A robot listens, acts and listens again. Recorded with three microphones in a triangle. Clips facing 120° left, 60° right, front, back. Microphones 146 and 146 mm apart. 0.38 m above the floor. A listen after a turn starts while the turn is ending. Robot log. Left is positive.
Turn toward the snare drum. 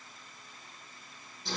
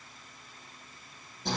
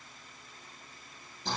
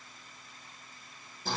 cmd idle
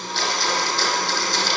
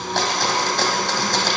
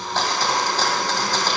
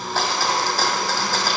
cmd idle
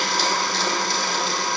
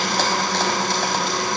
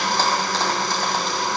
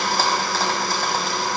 end: I can't make out a snare drum, only a blender.